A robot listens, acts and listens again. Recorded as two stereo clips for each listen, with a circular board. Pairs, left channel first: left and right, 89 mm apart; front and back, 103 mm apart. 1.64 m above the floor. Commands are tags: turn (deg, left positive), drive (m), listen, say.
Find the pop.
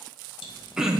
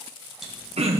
<listen/>
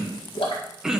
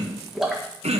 <turn deg="95"/>
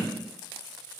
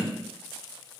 <say>I heard a pop from this way, but can't make it out now.</say>